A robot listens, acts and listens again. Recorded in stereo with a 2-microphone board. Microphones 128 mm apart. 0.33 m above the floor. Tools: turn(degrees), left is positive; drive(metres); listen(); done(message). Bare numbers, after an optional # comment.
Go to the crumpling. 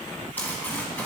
turn(30)
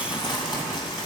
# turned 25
# So it is at 140° left.
turn(140)
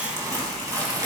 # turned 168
# The crumpling is now 25° right.
turn(-25)
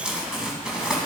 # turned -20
drive(1.0)
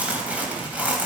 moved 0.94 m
# The crumpling is now 15° right.
turn(-15)
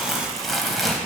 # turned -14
drive(1.0)
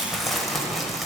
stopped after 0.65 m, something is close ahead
done("I am next to the crumpling.")